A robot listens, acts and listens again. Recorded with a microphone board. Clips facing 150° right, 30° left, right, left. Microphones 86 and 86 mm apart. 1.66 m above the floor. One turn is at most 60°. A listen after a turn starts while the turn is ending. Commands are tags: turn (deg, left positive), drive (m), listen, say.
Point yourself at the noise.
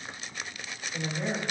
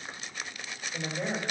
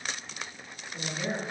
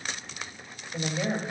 <turn deg="60"/>
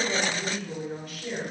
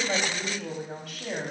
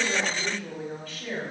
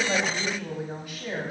<turn deg="15"/>
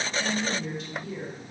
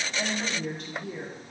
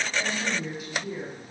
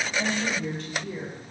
<turn deg="-10"/>
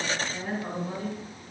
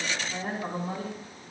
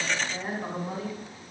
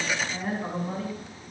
<turn deg="-10"/>
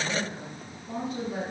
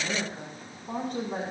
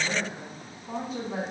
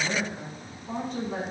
<say>Facing the woman speaking, over 4 m away.</say>